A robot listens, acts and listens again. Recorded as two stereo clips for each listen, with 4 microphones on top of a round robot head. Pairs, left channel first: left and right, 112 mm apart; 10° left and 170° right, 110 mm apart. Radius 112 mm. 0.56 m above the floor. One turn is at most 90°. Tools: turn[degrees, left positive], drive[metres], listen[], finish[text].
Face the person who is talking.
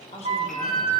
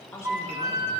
Thought: The man speaking: 75° left.
Action: turn[75]
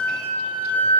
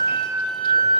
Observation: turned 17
Thought: Nothing new. It was at 60° left.
Action: turn[60]
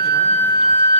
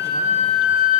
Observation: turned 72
Thought: Nothing new. It was at 15° right.
Action: turn[-15]
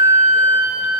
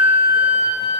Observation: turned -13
Action: finish[I heard a man speaking from this way, but can't make it out now.]